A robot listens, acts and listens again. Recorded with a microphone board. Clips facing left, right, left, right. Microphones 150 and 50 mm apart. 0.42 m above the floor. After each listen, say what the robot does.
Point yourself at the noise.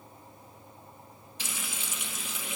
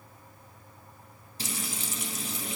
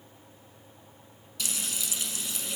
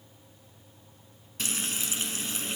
Turn 40° right.
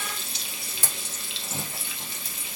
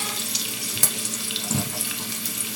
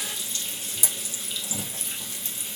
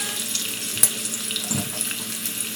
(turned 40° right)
Turn 100° right.
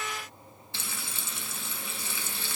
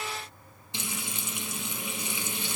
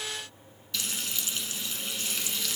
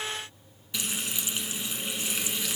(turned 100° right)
Turn 20° right.
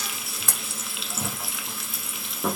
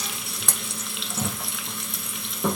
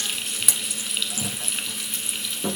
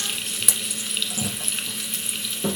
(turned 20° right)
Facing the frying, under 1 m away.